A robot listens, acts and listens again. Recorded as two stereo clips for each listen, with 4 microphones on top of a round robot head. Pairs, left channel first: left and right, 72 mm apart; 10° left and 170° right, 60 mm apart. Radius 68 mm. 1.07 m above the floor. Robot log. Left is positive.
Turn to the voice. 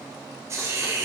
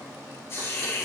cmd idle
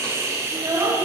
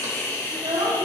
note: The child speaking: 155° right.
cmd yaw -155
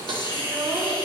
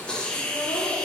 cmd idle
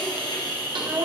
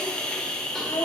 note: The child speaking is now 35° right.
cmd yaw -35
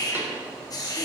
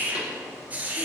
cmd idle
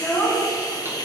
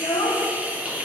note: The child speaking is now 10° left.
cmd yaw +10
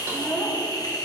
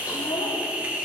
cmd idle
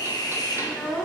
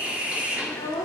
end: Found it: a child speaking, straight ahead.